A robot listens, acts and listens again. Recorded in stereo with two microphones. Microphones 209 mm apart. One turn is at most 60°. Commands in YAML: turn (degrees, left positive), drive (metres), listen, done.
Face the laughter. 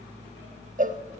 listen: true
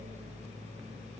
listen: true
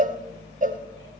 done: "I can't make out laughter to turn to."